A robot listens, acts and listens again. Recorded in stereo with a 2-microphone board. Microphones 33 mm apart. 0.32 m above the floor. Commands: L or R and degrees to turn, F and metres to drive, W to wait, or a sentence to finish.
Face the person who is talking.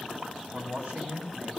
R50
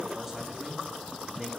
Found it: a man speaking, straight ahead.